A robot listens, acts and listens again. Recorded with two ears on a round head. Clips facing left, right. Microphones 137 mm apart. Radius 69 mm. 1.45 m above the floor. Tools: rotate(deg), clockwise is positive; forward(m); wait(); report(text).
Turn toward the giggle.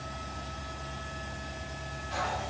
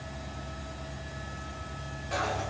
wait()
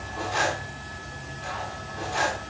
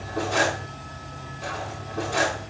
wait()
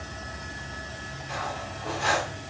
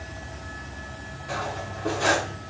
report("I can't make out a giggle to turn to.")